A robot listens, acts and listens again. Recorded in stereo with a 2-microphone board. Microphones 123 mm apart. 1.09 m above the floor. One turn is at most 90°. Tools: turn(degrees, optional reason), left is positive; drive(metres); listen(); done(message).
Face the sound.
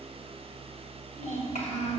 turn(degrees=75, reason="The child speaking: about 75° left or 105° left.")
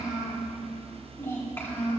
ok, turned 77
turn(degrees=15, reason="So it is at 15° left.")
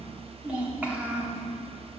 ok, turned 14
turn(degrees=-20, reason="The child speaking is now 20° right.")
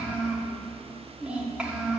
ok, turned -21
turn(degrees=-10, reason="The child speaking is now 10° right.")
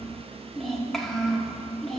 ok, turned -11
done("Found it: a child speaking, straight ahead.")